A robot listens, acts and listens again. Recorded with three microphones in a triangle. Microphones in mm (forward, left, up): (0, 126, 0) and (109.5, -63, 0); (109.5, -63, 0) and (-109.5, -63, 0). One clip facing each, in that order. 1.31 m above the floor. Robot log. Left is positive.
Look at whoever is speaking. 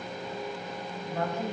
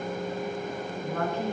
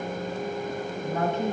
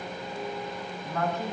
note: The woman speaking: 65° right.
cmd yaw -65
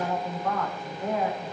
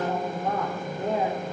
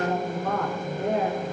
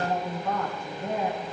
end: Found it: a woman speaking, straight ahead.